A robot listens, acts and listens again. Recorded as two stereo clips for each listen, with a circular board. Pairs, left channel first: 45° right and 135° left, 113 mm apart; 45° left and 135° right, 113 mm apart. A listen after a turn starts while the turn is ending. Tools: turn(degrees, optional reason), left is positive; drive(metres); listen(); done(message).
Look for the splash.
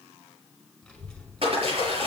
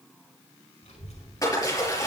turn(degrees=105, reason="The splash: 105° left.")
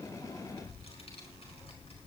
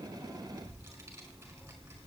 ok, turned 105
done("Facing where the splash came from. I can't hear it now.")